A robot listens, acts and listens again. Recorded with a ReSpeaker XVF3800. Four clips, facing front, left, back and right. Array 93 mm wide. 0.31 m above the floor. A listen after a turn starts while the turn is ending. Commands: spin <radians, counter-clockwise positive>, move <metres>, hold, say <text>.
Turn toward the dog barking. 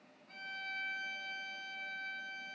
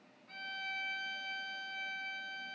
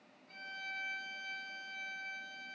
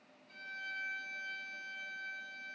hold
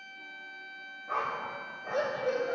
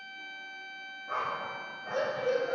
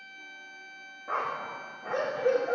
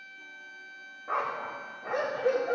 spin -2.36
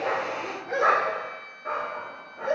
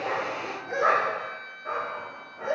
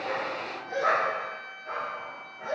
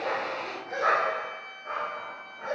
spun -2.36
spin 0.17
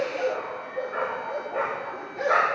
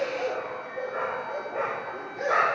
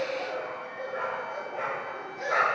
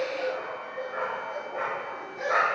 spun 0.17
say Found it: a dog barking, straight ahead.